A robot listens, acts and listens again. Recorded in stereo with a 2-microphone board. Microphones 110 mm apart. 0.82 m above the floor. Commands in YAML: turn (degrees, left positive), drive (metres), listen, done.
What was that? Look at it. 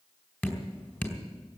turn: 15
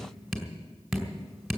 done: "Facing the dripping."